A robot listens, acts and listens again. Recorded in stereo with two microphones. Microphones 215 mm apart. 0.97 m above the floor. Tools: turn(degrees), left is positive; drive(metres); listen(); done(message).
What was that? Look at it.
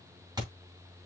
turn(degrees=-15)
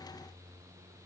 listen()
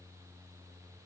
done("I heard a thud, but can't make it out now. It was about straight ahead or 150° right.")